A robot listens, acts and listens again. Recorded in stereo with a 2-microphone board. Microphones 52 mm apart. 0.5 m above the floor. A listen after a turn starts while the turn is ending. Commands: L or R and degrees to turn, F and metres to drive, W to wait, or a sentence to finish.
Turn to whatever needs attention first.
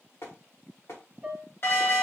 L55
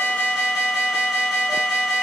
Found it: an alarm, straight ahead.